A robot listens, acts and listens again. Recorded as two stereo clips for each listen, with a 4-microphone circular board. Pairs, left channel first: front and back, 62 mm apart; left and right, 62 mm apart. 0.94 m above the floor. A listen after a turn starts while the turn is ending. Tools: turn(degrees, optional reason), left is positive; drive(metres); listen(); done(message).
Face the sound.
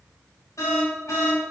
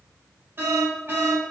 turn(degrees=-35, reason="The alarm: 35° right.")
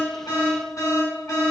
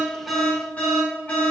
turn(degrees=25, reason="The alarm is now 25° left.")
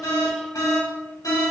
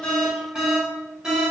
turn(degrees=-10, reason="The alarm is now 10° right.")
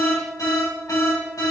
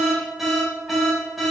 done("Found it: an alarm, straight ahead.")